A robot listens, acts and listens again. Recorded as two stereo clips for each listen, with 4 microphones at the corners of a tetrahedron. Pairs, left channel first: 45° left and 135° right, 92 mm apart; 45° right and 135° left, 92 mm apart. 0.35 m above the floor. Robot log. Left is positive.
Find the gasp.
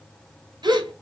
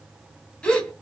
note: The gasp: 120° right.
cmd yaw -120
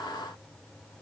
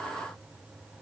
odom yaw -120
end: Facing where the gasp came from. I can't hear it now.